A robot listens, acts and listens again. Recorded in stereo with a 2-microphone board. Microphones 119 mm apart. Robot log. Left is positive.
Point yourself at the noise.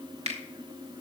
note: The finger snap: about 60° right or 120° right.
cmd yaw -60
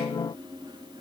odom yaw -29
cmd idle
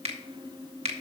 note: So it is at 75° right.
cmd yaw -75
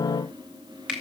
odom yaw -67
note: The finger snap is now 10° right.
cmd yaw -10
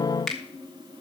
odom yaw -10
end: Facing the finger snap, 1 to 2 m away.